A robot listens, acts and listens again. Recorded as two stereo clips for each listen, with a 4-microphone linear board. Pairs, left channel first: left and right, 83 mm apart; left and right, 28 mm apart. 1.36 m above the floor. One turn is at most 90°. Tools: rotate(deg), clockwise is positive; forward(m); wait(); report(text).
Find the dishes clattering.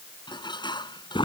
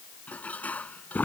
rotate(-65)
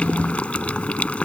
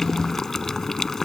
wait()
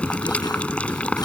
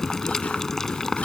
wait()
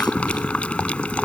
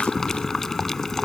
report("I heard dishes clattering, but can't make it out now. It was about straight ahead or 50° left.")